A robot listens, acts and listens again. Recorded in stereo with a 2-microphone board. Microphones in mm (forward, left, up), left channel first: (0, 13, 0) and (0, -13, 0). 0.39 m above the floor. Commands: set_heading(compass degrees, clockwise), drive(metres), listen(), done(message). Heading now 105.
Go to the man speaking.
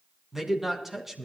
set_heading(135)
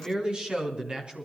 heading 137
set_heading(272)
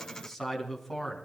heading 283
set_heading(273)
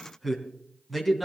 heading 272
drive(1.0)
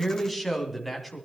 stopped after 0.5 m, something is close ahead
done("Something is in my way. I am facing the man speaking but have not reached it.")